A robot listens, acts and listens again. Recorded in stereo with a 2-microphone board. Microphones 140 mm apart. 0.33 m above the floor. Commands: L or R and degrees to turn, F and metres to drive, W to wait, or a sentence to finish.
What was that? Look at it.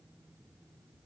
W
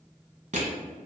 R55
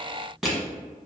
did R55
Found it: crushing, straight ahead, 1 to 2 m away.